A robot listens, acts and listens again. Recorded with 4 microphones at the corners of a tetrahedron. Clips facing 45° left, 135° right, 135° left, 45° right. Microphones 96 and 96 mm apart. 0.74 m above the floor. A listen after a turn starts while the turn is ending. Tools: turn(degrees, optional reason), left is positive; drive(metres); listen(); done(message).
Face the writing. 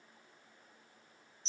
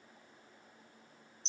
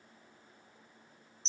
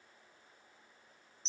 listen()
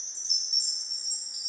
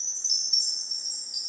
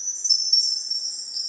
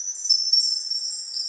listen()
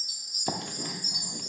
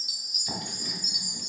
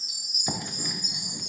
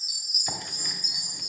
turn(degrees=55, reason="The writing: 55° left.")
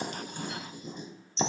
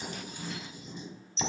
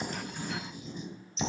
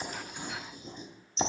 done("Facing the writing.")